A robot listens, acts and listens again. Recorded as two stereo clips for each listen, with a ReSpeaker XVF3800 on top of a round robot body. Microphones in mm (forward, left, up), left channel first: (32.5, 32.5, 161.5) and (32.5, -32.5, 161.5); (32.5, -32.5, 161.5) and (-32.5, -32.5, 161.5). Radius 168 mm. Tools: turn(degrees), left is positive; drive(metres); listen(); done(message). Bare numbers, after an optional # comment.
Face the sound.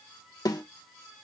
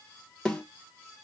# The snare drum: 75° left.
turn(75)
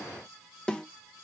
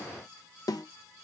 # The snare drum is now 15° left.
turn(15)
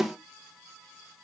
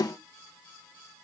done("Found it: a snare drum, straight ahead, 1 to 2 m away.")